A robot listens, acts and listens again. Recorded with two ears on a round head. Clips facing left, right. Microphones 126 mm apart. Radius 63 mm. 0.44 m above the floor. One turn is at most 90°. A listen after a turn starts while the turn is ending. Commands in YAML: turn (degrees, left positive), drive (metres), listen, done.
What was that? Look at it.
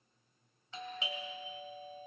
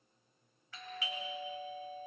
turn: 20
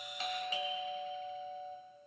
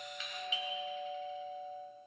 turn: 90
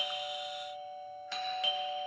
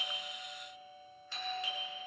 turn: 65
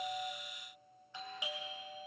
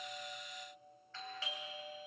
turn: 15
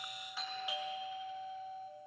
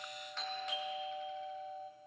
done: "Facing the doorbell, 2 to 4 m away."